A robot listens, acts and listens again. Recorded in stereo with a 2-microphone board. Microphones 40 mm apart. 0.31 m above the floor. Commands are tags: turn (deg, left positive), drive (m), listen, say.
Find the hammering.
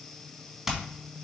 <turn deg="-30"/>
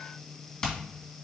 <turn deg="20"/>
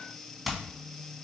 <say>Found it: hammering, straight ahead.</say>